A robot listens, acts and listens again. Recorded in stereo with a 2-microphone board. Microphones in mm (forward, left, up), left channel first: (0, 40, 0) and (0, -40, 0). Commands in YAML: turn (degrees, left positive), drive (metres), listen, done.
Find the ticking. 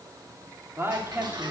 turn: -60
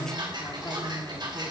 turn: -60
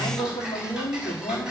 turn: -10
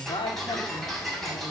done: "Found it: ticking, straight ahead."